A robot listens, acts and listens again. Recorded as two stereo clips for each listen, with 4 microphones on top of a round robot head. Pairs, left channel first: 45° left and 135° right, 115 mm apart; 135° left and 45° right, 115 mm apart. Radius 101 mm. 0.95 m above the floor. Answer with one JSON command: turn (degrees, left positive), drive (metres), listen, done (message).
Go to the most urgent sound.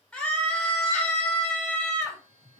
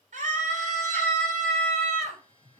{"turn": -30}
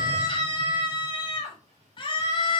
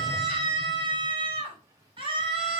{"drive": 1.0}
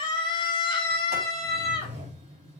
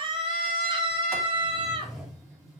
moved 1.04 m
{"drive": 1.0}
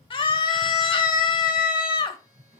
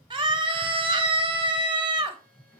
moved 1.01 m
{"drive": 1.0}
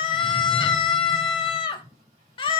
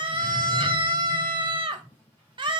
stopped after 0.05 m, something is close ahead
{"done": "I am next to the scream."}